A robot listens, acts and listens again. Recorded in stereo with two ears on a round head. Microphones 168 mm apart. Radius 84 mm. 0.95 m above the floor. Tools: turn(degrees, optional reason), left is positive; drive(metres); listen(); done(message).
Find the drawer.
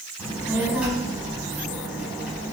listen()
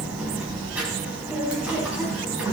listen()
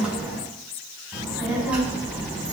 done("I can't make out a drawer, only a child speaking.")